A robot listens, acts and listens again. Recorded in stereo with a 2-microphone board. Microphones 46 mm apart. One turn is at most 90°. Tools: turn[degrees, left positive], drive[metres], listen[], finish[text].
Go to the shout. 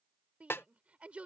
Thought: The shout: about 30° right or 150° right.
Action: turn[-30]
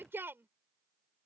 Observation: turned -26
Thought: So it is at 125° right.
Action: turn[-90]
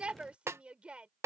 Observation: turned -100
Thought: The shout is now 25° right.
Action: turn[-25]
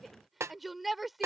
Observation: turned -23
Action: drive[1.0]
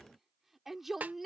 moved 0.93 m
Action: drive[1.0]
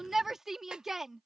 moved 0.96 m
Action: drive[1.0]
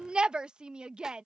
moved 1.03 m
Thought: The shout is now 20° right.
Action: turn[-20]
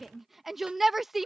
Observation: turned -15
Action: drive[1.0]
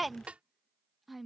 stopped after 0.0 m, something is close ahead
Action: finish[Arrived at the shout, straight ahead.]